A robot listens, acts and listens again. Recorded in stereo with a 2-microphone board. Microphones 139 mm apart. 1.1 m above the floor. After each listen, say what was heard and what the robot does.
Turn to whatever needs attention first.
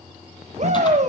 The shout: about 50° right or 130° right. Turn 50° right.
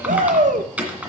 So it is at 75° right. Turn 75° right.
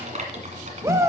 The shout is now 20° right. Turn 20° right.
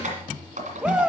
Facing the shout.